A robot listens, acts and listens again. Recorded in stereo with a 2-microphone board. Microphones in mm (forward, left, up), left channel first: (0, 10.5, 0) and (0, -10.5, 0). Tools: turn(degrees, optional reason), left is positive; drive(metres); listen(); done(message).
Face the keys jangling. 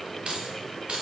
turn(degrees=-70, reason="The keys jangling: about 70° right or 110° right.")
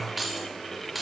turn(degrees=-10, reason="So it is at 10° right.")
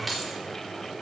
done("Found it: keys jangling, straight ahead, 2 to 4 m away.")